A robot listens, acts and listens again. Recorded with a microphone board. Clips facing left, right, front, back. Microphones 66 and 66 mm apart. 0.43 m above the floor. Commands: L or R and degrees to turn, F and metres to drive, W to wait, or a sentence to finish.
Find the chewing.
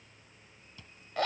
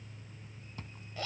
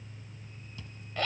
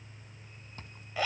R135
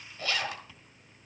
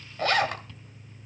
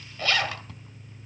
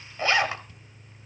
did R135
L10
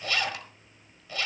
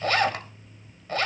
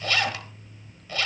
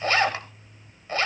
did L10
W
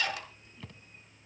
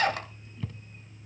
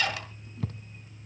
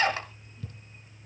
Facing the chewing, 1 to 2 m away.